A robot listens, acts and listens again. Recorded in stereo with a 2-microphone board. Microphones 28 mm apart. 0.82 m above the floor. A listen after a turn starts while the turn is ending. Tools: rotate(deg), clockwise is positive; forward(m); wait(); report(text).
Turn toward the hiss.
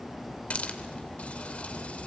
rotate(-55)
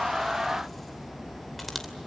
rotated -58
wait()
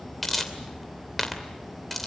report("Found it: a hiss, straight ahead.")